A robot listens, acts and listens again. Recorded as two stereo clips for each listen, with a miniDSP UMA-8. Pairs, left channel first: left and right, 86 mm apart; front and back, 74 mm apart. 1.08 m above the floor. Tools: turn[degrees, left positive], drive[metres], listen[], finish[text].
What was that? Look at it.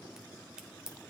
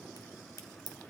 Thought: The crack: 10° right.
Action: turn[-10]
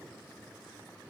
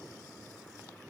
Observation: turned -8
Action: finish[Facing where the crack came from. I can't hear it now.]